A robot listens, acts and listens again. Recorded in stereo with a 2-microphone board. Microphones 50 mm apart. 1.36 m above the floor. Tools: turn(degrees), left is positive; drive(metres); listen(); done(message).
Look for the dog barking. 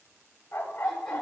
turn(degrees=40)
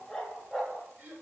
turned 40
done("Found it: a dog barking, straight ahead.")